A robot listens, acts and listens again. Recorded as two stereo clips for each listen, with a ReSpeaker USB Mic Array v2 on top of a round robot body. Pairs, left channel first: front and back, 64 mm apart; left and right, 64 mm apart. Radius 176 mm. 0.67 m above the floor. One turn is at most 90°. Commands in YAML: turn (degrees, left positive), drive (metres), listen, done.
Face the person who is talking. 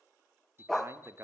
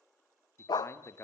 turn: 90
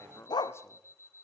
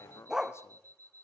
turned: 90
turn: 45
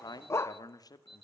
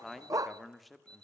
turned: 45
done: "Found it: a man speaking, straight ahead, 2 to 4 m away."